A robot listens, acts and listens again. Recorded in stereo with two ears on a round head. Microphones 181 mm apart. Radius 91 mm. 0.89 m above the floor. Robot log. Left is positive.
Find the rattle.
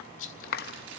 note: The rattle: about 70° left or 110° left.
cmd yaw +70
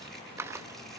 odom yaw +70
cmd idle
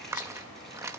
cmd idle
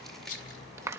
note: So it is at 40° left.
cmd yaw +40
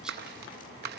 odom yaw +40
cmd idle
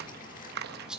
end: Found it: a rattle, straight ahead.